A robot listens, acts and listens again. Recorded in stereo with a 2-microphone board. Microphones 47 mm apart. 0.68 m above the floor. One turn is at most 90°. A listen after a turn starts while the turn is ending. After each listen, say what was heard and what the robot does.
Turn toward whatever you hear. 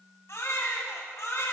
Turn 90° left.
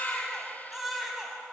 Found it: a baby crying, straight ahead, 2 to 4 m away.